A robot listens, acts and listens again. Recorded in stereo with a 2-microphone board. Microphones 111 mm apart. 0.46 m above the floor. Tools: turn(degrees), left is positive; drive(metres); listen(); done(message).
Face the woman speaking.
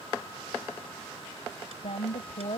turn(degrees=70)
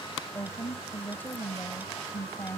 turn(degrees=20)
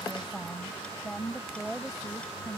done("Found it: a woman speaking, straight ahead.")